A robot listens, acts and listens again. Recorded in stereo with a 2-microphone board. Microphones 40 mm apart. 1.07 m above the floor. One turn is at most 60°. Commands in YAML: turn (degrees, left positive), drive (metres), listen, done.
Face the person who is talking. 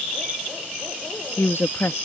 turn: 60
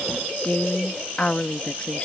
turn: 30
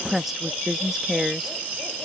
turn: -10
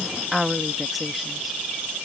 done: "Found it: a woman speaking, straight ahead."